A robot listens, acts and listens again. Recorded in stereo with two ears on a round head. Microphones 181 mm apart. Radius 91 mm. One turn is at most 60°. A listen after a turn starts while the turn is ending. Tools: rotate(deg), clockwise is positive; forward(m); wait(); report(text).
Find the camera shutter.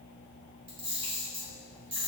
rotate(25)
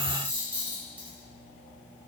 rotate(10)
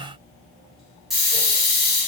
report("Found it: a camera shutter, straight ahead, under 1 m away.")